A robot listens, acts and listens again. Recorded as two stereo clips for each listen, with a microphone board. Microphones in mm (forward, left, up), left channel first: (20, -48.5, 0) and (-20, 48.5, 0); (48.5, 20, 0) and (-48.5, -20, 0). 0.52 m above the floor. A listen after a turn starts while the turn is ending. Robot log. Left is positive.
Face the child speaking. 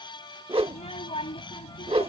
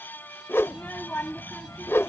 note: The child speaking: 50° right.
cmd yaw -50
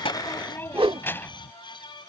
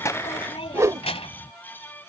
end: Found it: a child speaking, straight ahead.